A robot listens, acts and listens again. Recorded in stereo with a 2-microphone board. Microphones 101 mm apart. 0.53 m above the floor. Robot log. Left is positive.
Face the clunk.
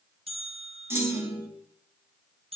note: The clunk: about 25° right or 155° right.
cmd yaw -25
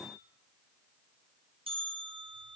cmd idle
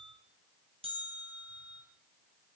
end: I heard a clunk, but can't make it out now. It was about straight ahead or 130° right.